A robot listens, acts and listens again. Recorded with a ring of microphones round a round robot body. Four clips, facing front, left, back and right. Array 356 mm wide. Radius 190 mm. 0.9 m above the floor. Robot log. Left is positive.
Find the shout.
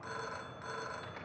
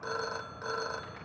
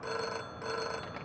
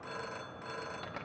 cmd idle
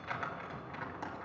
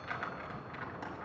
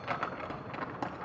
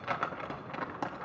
cmd idle
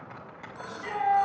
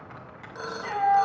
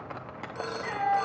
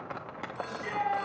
note: The shout: 95° left.
cmd yaw +95
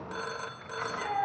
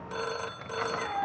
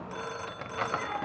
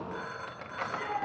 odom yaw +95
note: The shout is now 40° left.
cmd yaw +40
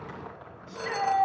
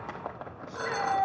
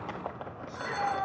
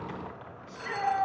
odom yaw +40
end: Found it: a shout, straight ahead.